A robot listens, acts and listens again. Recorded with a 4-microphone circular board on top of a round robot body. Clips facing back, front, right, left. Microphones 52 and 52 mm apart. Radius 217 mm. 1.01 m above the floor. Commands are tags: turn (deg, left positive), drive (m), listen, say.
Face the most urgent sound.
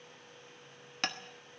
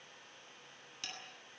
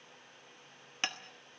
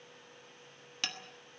<listen/>
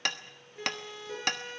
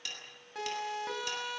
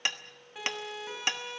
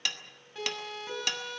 <turn deg="-10"/>
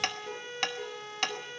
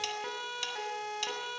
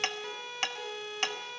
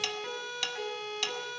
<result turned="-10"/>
<say>Found it: a siren, straight ahead.</say>